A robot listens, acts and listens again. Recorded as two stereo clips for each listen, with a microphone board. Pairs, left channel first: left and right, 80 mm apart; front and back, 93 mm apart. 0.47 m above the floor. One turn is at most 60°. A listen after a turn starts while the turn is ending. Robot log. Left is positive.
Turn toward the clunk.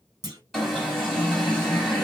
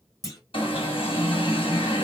note: The clunk: 50° right.
cmd yaw -50
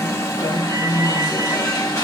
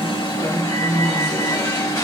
end: Facing where the clunk came from. I can't hear it now.